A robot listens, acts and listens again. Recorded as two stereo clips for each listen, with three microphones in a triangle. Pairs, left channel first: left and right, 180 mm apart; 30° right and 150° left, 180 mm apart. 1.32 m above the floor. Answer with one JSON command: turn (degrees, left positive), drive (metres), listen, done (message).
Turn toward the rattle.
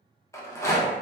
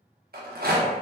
{"turn": 160}
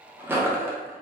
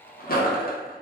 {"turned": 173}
{"turn": -10}
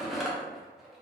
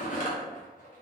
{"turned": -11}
{"done": "Facing the rattle."}